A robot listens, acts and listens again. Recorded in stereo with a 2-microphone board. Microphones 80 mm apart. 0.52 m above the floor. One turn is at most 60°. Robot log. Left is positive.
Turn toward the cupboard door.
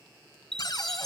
note: The cupboard door: about 55° left or 125° left.
cmd yaw +55
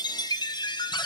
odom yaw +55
note: So it is at 65° left.
cmd yaw +60
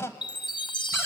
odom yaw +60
note: The cupboard door is now 30° left.
cmd yaw +30
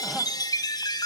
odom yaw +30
cmd idle
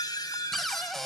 end: Facing the cupboard door, 1 to 2 m away.